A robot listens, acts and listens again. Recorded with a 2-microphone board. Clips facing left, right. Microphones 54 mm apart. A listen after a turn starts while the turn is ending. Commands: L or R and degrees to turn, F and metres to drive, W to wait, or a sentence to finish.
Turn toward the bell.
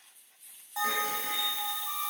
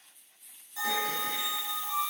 L90
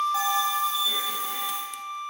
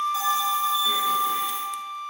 W
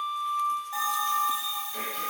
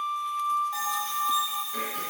Found it: a bell, straight ahead, 1 to 2 m away.